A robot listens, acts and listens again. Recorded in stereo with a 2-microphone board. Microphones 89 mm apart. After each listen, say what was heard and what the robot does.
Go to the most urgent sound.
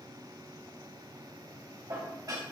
Keep listening.
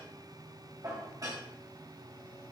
Keep listening.
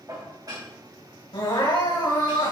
Turn 90° left.
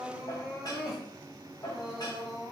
Drive 1.0 m forward.
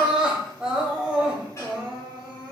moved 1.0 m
The crying is now 10° right. Turn 10° right.
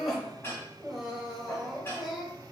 Drive 1.0 m forward.
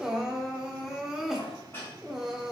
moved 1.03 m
Drive 1.0 m forward.
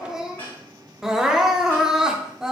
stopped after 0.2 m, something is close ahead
Arrived at the crying, straight ahead.